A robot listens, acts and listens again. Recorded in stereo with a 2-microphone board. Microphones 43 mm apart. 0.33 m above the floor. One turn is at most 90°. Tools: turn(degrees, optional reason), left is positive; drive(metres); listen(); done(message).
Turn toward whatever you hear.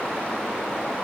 listen()
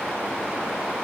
listen()
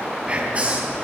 turn(degrees=-30, reason="The whispering: about 30° right or 150° right.")
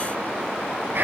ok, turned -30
turn(degrees=-90, reason="So it is at 115° right.")
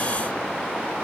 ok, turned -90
turn(degrees=-25, reason="Nothing new. It was at 25° right.")
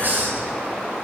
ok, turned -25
turn(degrees=-50, reason="The whispering is now 50° right.")
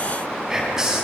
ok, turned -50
turn(degrees=-15, reason="The whispering is now 15° right.")
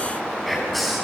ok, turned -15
done("Found it: whispering, straight ahead, 2 to 4 m away.")